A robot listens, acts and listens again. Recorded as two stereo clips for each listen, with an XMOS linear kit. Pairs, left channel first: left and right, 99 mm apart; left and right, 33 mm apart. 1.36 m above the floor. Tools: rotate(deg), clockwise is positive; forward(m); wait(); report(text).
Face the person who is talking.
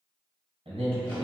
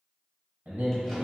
rotate(70)
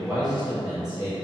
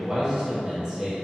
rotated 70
rotate(35)
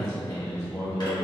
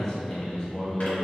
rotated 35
report("Facing the man speaking, 1 to 2 m away.")